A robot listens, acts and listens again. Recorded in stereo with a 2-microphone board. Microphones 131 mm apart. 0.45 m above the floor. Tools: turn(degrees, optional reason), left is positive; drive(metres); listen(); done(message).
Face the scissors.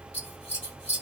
turn(degrees=55, reason="The scissors: about 55° left or 125° left.")
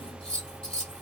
done("Facing the scissors.")